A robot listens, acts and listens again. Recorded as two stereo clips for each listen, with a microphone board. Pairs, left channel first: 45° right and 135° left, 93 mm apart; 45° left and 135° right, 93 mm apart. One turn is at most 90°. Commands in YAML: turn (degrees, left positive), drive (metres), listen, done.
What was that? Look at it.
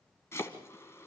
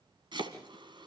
turn: -90
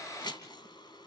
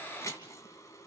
turn: -10
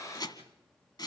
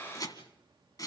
done: "Facing the chopping, 2 to 4 m away."